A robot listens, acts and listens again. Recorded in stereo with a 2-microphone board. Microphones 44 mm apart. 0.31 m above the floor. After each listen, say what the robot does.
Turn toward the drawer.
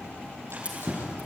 Turn 70° right.
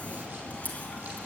Keep listening.
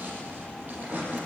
Turn 40° right.
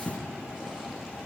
Found it: a drawer, straight ahead, over 4 m away.